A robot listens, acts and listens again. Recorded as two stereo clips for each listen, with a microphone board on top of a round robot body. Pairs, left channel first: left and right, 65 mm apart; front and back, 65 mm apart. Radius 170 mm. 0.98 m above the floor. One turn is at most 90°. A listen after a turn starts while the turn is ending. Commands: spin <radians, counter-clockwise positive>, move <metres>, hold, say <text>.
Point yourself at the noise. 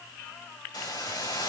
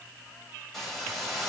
spin 1.48
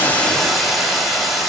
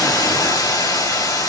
say Facing the hiss, over 4 m away.